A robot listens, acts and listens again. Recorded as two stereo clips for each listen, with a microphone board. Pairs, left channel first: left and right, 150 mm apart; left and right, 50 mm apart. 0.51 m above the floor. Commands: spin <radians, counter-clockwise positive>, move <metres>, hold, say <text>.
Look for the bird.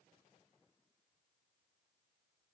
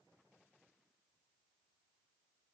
hold
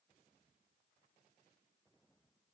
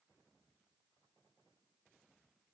hold
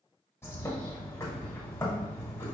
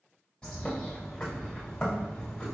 spin 0.35
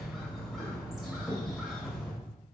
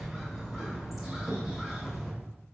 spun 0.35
say Found it: a bird, straight ahead, 1 to 2 m away.